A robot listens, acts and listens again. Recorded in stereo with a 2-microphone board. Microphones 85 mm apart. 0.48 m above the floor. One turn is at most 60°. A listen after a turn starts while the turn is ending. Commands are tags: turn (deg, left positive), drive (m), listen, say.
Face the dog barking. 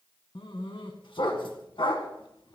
<turn deg="60"/>
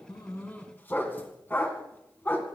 <turn deg="25"/>
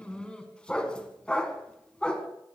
<turn deg="15"/>
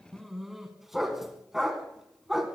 <say>Facing the dog barking.</say>